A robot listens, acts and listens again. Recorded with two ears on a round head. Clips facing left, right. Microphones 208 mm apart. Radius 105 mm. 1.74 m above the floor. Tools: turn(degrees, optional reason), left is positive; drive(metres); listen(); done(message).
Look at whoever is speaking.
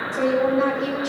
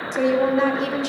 turn(degrees=-65, reason="The woman speaking: about 65° right or 115° right.")
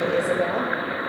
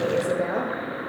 turn(degrees=-10, reason="So it is at 10° right.")
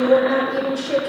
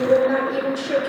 done("Facing the woman speaking.")